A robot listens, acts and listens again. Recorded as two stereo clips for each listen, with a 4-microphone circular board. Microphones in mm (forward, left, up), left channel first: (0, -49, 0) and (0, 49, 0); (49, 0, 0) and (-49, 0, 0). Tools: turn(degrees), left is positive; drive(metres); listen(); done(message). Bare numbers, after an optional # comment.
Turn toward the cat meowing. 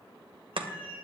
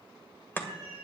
# The cat meowing: 65° right.
turn(-65)
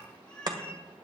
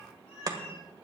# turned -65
# The cat meowing is now 15° right.
turn(-15)
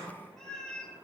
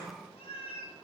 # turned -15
# The cat meowing is now 10° right.
turn(-10)
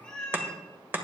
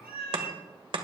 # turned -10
# The cat meowing is now 15° right.
turn(-15)
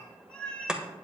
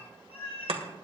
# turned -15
# The cat meowing is now 15° right.
turn(-15)
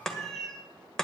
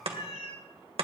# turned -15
done("Found it: a cat meowing, straight ahead.")